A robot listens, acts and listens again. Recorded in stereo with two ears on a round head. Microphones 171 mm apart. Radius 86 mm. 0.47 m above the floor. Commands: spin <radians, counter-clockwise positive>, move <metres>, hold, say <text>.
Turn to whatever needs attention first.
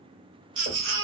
spin -1.13
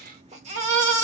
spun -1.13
spin -0.70
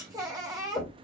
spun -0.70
spin -0.35
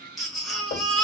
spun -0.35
say Found it: a baby crying, straight ahead, under 1 m away.